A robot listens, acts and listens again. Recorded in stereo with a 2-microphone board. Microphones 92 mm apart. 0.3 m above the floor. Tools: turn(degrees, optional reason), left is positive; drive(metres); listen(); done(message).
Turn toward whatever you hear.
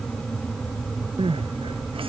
turn(degrees=-90)
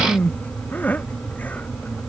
turn(degrees=15, reason="So it is at 15° left.")
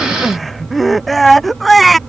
done("Facing the crying.")